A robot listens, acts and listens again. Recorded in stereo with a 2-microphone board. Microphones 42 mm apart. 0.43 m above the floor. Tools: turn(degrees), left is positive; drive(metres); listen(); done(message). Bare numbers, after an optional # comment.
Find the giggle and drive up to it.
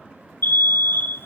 listen()
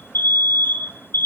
listen()
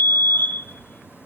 done("I can't make out a giggle, only an alarm.")